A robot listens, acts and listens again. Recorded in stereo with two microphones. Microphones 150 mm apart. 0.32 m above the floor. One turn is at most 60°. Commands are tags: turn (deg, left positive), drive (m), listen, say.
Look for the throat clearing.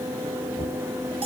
<listen/>
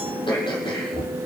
<turn deg="35"/>
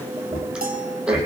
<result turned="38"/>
<say>Facing the throat clearing.</say>